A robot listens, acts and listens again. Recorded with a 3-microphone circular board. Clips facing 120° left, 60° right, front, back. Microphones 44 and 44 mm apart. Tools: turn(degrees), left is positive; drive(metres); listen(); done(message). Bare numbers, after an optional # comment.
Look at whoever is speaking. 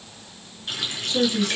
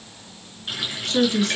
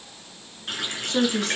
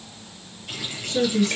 # The woman speaking: 15° right.
turn(-15)
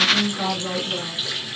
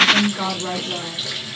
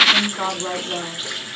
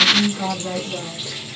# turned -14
done("Found it: a woman speaking, straight ahead, over 4 m away.")